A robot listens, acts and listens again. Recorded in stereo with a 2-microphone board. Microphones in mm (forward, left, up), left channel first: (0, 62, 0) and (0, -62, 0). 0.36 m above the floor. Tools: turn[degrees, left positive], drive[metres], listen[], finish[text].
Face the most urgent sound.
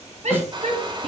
Thought: The shout: about 70° right or 110° right.
Action: turn[-70]
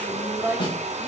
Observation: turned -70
Thought: So it is at 20° right.
Action: turn[-20]
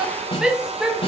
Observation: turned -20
Action: finish[Facing the shout.]